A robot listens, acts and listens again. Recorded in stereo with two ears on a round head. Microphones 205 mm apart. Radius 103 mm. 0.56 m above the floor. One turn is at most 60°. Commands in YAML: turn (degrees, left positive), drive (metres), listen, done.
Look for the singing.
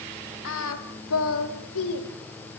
turn: 60
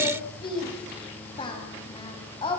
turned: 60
turn: 20
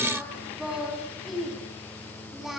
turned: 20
done: "Facing the singing."